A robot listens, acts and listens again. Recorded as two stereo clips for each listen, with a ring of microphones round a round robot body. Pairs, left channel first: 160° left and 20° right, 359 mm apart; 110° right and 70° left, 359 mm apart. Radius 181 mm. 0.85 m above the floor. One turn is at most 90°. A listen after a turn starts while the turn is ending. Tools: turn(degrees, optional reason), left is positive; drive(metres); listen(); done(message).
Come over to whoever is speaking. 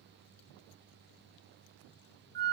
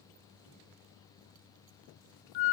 listen()
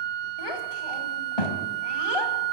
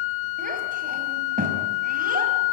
turn(degrees=90, reason="The child speaking: 135° left.")
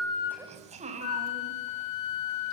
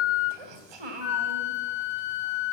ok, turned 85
turn(degrees=50, reason="The child speaking is now 50° left.")
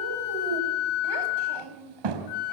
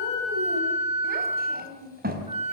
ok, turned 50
drive(metres=1.0)
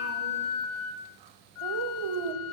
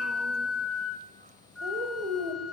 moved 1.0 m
drive(metres=1.0)
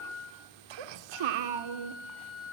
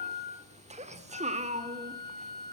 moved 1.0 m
drive(metres=1.0)
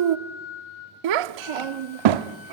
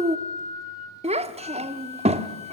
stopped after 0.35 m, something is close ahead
done("Arrived at the child speaking, straight ahead.")